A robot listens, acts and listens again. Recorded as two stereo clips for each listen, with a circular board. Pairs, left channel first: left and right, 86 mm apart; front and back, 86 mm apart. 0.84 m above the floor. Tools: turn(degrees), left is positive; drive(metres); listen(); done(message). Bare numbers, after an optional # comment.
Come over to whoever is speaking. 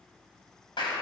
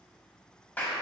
listen()
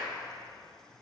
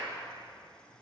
listen()
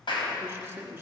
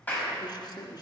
# The man speaking: 25° right.
turn(-25)
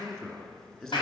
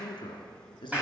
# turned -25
# The man speaking is now 10° left.
turn(10)
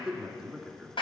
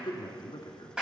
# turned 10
drive(1.0)
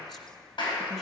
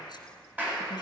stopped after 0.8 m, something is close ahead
listen()
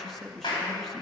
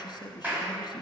done("I am next to the man speaking.")